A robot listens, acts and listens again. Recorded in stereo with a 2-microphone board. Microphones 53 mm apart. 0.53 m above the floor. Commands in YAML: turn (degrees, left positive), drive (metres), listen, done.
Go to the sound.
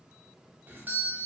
turn: -35
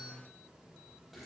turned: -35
listen: true
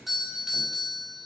drive: 1.0
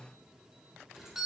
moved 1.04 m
turn: -10
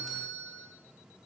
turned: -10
drive: 1.0
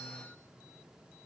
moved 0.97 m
listen: true
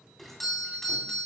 drive: 1.0
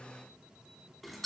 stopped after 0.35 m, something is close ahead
done: "I am next to the doorbell."